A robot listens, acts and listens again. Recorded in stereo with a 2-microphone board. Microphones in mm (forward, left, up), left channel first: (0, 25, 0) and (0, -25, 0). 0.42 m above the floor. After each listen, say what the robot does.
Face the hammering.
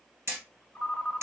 Turn 65° right.
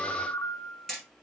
Facing the hammering.